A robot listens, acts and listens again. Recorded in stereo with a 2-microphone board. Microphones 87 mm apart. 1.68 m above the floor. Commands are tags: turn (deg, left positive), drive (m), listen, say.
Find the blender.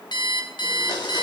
<turn deg="55"/>
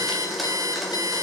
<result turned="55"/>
<say>Facing the blender.</say>